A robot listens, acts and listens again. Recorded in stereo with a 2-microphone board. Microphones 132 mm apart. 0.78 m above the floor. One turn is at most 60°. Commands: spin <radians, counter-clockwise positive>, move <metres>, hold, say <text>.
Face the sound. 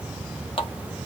spin 0.70
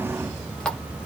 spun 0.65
say Facing the running tap.